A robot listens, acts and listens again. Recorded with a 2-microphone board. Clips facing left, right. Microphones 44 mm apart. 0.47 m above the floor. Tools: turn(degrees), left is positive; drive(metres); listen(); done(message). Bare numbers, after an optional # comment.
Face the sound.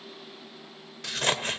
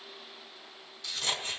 # The scissors: about 60° left or 120° left.
turn(60)
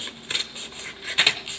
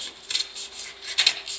# So it is at 35° left.
turn(35)
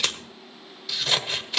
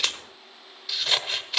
done("Found it: scissors, straight ahead, 1 to 2 m away.")